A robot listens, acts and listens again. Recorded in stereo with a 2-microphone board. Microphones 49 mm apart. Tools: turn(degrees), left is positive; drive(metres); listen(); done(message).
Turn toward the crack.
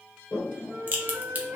turn(degrees=-30)
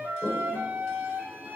listen()
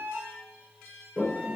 done("I heard a crack, but can't make it out now. It was about straight ahead or 120° right.")